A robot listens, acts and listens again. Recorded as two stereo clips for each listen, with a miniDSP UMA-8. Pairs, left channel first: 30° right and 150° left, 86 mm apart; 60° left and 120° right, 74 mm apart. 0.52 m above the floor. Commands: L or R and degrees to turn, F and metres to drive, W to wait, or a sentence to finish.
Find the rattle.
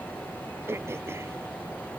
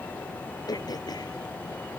W
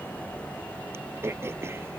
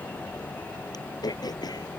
W
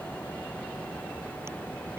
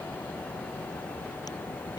I can't make out a rattle, only throat clearing.